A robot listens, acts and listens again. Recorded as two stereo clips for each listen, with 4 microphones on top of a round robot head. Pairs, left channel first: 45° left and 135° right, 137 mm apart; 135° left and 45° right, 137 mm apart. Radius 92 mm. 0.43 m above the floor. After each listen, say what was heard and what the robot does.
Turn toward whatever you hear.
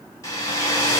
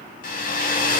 The hair dryer: 115° left. Turn 115° left.
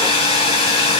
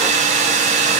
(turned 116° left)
Found it: a hair dryer, straight ahead.